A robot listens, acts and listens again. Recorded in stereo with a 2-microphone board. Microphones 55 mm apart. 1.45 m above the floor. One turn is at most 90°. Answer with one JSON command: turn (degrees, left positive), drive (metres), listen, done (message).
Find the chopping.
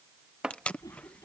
{"turn": -30}
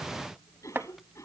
{"turn": -90}
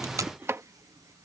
{"turn": -55}
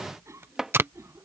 {"turn": -10}
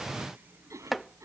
{"done": "Facing the chopping."}